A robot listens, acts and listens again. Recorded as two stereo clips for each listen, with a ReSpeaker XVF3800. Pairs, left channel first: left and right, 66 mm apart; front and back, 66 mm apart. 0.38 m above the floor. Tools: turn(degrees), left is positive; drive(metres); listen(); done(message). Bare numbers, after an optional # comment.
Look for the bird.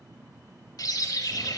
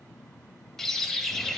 # The bird: 85° left.
turn(85)
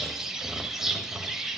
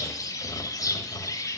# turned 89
done("Found it: a bird, straight ahead, under 1 m away.")